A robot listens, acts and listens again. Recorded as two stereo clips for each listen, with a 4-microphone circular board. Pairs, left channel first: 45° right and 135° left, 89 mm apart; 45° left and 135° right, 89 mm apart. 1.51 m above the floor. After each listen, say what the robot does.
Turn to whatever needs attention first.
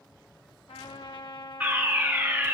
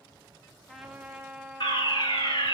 Turn 60° left.
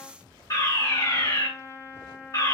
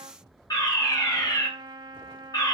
Found it: a fire alarm, straight ahead, 2 to 4 m away.